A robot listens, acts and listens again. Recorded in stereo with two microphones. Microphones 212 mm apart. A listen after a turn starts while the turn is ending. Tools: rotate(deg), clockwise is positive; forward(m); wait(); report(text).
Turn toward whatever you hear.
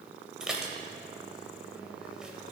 rotate(30)
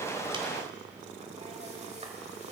rotate(145)
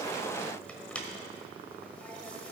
report("Found it: dishes clattering, straight ahead, 1 to 2 m away.")